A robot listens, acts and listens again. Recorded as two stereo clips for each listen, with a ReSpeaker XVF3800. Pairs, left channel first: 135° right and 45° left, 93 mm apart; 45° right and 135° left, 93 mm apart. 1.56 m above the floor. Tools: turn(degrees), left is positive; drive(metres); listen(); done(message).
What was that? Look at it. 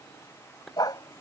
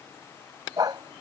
turn(degrees=180)
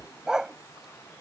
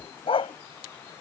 turn(degrees=-40)
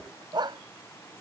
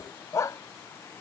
turn(degrees=10)
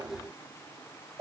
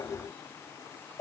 done("Facing the dog barking.")